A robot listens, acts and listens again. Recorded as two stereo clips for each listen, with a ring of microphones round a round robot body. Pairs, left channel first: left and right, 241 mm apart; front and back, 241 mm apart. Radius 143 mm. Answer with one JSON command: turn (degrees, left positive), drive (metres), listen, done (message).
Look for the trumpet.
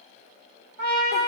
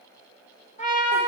{"turn": -60}
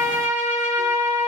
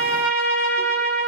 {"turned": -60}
{"turn": -10}
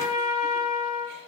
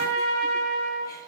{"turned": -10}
{"done": "Found it: a trumpet, straight ahead, 2 to 4 m away."}